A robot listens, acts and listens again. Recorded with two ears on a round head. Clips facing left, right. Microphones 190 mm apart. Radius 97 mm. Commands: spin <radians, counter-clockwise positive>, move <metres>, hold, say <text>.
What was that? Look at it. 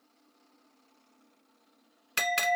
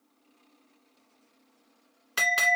spin 0.52
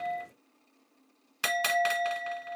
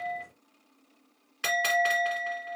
spin 2.01
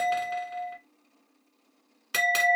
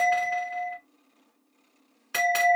spin 0.44
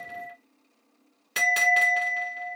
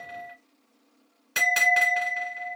say Facing the bell.